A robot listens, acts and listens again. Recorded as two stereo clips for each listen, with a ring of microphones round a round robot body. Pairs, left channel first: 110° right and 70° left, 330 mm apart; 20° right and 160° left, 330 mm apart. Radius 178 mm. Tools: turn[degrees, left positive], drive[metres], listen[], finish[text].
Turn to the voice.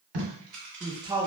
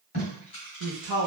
Thought: The man speaking: 145° left.
Action: turn[145]
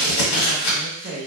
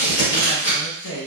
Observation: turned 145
Thought: The man speaking is now 10° left.
Action: turn[10]
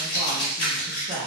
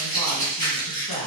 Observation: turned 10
Action: finish[Found it: a man speaking, straight ahead, under 1 m away.]